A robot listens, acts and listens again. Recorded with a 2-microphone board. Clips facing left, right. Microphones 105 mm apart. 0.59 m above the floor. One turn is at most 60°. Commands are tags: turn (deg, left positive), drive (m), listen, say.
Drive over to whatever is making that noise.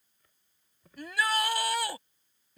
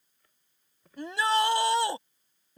<turn deg="-25"/>
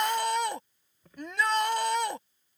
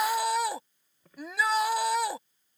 <drive m="1.0"/>
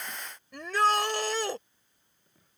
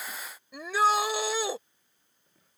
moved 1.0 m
<drive m="1.0"/>
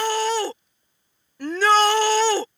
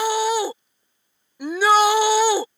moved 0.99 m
<turn deg="-10"/>
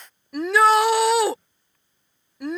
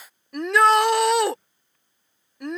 <drive m="1.0"/>
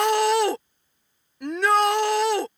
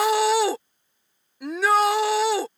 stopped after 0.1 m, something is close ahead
<say>Arrived at the shout, straight ahead.</say>